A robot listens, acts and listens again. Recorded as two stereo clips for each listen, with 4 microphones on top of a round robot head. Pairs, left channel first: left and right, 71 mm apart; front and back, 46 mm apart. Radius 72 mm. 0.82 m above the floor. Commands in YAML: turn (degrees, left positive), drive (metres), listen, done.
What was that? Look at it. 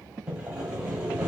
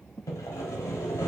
turn: -10
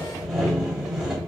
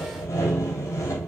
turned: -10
done: "Facing the sawing, under 1 m away."